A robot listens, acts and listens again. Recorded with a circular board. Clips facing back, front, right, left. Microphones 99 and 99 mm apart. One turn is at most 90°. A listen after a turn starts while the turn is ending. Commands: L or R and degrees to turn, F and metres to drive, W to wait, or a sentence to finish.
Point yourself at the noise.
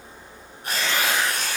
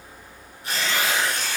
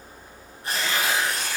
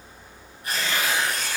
R90
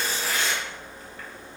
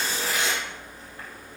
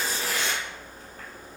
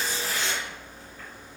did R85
R60
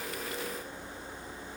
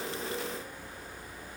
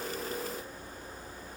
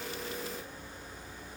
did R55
W
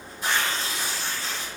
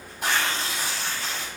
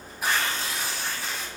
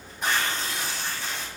Found it: tearing paper, straight ahead.